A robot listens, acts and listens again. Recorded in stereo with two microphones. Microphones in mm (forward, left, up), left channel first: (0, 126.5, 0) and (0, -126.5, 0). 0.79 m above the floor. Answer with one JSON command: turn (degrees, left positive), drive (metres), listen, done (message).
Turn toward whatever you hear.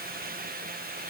{"listen": true}
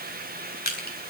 {"turn": 40}
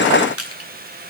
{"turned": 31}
{"turn": 110}
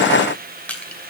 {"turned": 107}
{"done": "Facing the crushing."}